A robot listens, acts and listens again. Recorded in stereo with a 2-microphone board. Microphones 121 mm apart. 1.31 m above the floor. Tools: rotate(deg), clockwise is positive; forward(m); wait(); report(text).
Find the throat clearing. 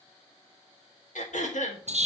rotate(-90)
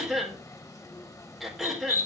report("Facing the throat clearing, 2 to 4 m away.")